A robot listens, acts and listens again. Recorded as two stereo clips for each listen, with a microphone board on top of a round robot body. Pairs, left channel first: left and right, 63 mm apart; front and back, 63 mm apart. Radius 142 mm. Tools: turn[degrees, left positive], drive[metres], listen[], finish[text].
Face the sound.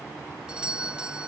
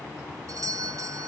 Thought: The doorbell: 165° right.
Action: turn[-165]
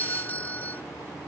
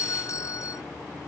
Thought: The doorbell is now 30° left.
Action: turn[30]
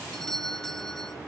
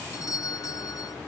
Action: finish[Found it: a doorbell, straight ahead.]